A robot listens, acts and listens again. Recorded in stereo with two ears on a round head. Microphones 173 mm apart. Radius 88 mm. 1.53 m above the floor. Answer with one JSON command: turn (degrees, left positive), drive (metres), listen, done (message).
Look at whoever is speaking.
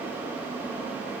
{"listen": true}
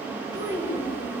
{"turn": -20}
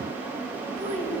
{"turn": -145}
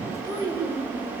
{"turn": -25}
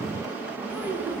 {"turn": -10}
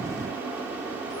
{"listen": true}
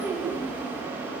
{"done": "Found it: a child speaking, straight ahead, over 4 m away."}